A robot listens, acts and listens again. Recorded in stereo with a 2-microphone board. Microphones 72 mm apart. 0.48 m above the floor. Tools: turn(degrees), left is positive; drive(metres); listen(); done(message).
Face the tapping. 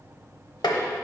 turn(degrees=90)
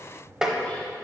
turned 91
turn(degrees=-10)
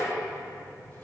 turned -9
listen()
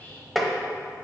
done("Found it: tapping, straight ahead, under 1 m away.")